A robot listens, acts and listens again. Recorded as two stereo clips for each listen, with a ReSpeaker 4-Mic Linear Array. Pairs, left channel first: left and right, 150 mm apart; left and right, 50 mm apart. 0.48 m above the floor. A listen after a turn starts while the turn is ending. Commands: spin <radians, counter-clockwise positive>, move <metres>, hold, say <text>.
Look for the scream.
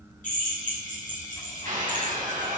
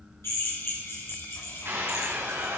spin -1.13
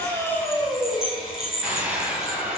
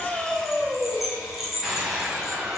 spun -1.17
spin -0.17
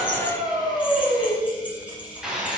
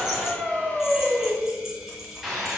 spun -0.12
say Found it: a scream, straight ahead.